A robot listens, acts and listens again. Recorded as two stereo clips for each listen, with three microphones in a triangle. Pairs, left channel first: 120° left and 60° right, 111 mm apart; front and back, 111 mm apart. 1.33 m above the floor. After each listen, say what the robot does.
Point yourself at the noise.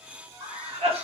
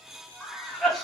Turn 90° right.
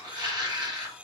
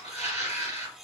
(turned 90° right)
Turn 10° right.
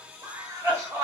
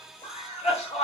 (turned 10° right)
Found it: a cough, straight ahead, 1 to 2 m away.